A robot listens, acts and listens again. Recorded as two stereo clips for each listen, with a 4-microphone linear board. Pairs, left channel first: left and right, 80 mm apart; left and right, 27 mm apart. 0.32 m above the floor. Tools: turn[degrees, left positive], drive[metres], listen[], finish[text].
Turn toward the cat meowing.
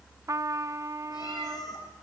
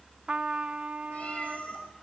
Thought: The cat meowing: about 55° left or 125° left.
Action: turn[55]
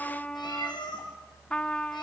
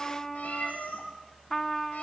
Thought: So it is at 70° left.
Action: turn[70]
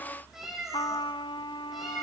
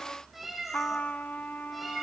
Action: finish[Facing the cat meowing, over 4 m away.]